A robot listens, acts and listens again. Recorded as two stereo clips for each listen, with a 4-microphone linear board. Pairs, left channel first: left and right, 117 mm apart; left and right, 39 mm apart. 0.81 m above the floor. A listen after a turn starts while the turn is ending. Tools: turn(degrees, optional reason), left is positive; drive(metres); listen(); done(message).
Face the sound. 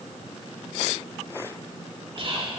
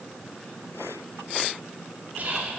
turn(degrees=-50, reason="The whispering: about 50° right or 130° right.")
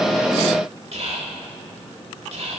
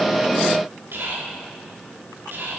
turn(degrees=-75, reason="So it is at 75° right.")
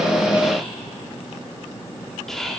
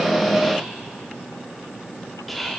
done("Found it: whispering, straight ahead, 2 to 4 m away.")